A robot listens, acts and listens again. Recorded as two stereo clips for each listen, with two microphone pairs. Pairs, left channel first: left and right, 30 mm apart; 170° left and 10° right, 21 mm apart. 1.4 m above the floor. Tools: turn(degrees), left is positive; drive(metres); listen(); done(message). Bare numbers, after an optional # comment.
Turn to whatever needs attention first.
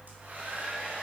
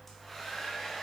listen()
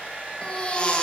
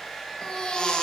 # The baby crying: 140° left.
turn(140)
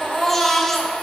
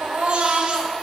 # The baby crying is now 10° left.
turn(10)
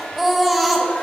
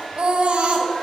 done("Facing the baby crying.")